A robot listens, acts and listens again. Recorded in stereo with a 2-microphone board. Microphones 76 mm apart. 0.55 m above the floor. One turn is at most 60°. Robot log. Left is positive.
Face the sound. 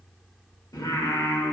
note: The singing: about 55° left or 125° left.
cmd yaw +55
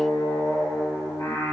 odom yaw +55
note: So it is at 60° left.
cmd yaw +60
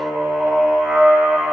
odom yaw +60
end: Facing the singing.